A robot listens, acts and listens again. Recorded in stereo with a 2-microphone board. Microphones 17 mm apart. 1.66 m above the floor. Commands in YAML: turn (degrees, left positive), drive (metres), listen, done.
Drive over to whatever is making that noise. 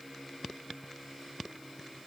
listen: true
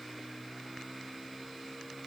listen: true
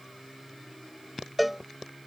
turn: -30
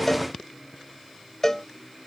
turn: 20
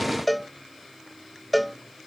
drive: 1.0
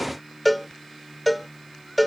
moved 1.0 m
drive: 1.0
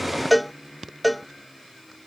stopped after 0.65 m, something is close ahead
done: "Arrived at the cowbell, straight ahead."